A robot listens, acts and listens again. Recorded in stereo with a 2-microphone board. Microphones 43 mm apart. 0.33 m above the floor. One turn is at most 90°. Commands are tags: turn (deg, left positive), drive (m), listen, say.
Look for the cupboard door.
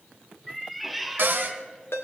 <turn deg="-50"/>
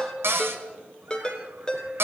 <turn deg="-75"/>
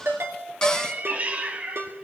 <listen/>
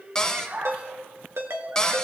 <turn deg="15"/>
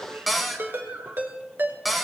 <say>Found it: a cupboard door, straight ahead, 1 to 2 m away.</say>